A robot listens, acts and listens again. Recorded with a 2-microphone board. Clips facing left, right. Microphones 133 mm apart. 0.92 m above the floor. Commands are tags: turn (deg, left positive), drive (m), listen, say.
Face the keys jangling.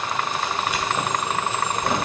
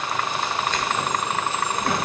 <turn deg="20"/>
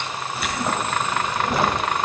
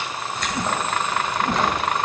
<turn deg="30"/>
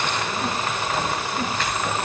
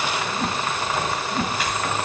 <turn deg="-10"/>
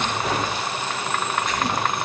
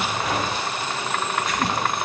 <say>Facing the keys jangling.</say>